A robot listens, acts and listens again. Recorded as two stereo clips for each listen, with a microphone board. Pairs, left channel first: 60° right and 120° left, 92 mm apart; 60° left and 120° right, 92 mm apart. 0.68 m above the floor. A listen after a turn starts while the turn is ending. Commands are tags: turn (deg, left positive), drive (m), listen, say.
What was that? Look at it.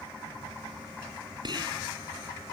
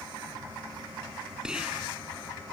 <turn deg="160"/>
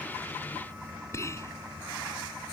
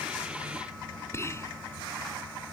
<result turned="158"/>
<say>Facing the whispering.</say>